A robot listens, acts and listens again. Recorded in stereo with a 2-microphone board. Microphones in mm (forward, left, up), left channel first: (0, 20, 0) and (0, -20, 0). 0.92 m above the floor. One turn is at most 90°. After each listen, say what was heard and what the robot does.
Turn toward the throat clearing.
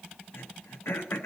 The throat clearing: about 75° left or 105° left. Turn 75° left.
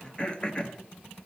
So it is at 25° left. Turn 25° left.
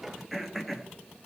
Found it: throat clearing, straight ahead.